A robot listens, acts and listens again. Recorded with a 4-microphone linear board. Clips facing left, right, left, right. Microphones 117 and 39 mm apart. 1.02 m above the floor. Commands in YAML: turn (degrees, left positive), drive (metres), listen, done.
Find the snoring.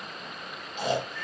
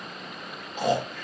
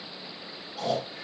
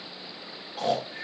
turn: -45
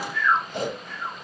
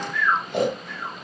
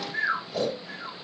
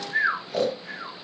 turn: -85
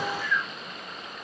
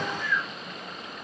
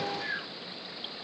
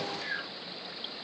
done: "Found it: snoring, straight ahead."